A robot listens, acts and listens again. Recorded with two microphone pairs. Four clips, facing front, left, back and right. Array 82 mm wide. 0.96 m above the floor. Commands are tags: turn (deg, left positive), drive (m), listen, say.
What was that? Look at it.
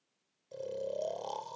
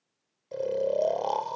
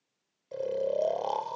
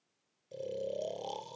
<turn deg="120"/>
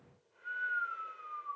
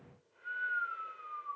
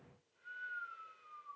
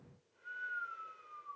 <turn deg="35"/>
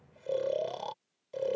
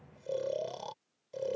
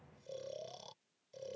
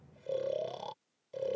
<turn deg="10"/>
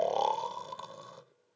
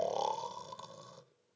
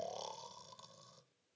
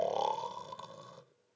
<say>Facing the snoring.</say>